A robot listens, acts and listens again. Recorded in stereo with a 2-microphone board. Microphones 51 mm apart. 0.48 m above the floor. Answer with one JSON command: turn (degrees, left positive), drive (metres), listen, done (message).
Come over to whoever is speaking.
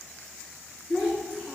{"turn": -30}
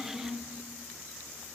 {"turn": 20}
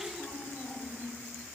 {"drive": 1.0}
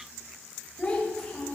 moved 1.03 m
{"turn": 15}
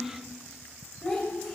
{"drive": 1.0}
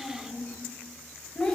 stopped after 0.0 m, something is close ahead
{"done": "I am next to the child speaking."}